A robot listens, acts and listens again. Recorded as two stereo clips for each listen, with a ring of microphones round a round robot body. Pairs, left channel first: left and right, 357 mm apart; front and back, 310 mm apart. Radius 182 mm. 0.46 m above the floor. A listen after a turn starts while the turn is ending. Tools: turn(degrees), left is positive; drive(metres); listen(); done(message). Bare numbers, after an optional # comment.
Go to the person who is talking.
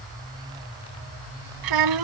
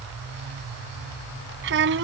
# The child speaking: 120° right.
turn(-120)
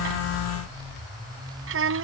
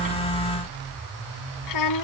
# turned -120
# The child speaking is now 35° right.
turn(-35)
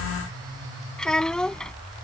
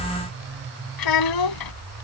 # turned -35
drive(1.0)
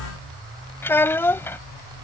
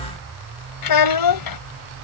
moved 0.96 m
drive(1.0)
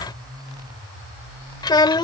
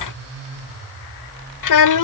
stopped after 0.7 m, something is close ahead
# The child speaking is now 10° left.
turn(10)
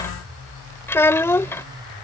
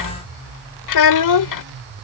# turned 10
done("Arrived at the child speaking, straight ahead.")